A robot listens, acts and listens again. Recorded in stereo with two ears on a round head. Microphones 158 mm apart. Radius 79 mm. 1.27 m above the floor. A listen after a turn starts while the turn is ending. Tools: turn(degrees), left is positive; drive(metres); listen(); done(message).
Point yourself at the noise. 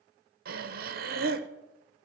turn(degrees=-55)
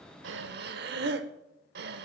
turn(degrees=-65)
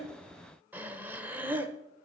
turn(degrees=-10)
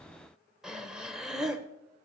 done("Found it: breathing, straight ahead.")